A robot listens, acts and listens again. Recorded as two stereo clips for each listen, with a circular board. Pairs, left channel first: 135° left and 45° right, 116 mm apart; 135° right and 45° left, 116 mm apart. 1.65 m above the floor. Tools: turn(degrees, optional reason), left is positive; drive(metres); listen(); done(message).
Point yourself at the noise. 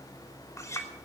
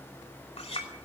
turn(degrees=-160, reason="The clink: 160° right.")
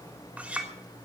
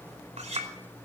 turn(degrees=35, reason="The clink is now 35° left.")
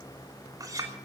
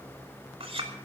turn(degrees=10, reason="The clink is now 10° left.")
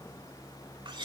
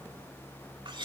done("Facing the clink, 2 to 4 m away.")